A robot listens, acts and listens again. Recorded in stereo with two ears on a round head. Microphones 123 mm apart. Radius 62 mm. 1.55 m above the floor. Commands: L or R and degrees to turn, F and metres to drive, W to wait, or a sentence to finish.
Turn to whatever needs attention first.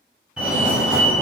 R30
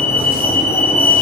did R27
L20
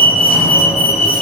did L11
Facing the fire alarm, 1 to 2 m away.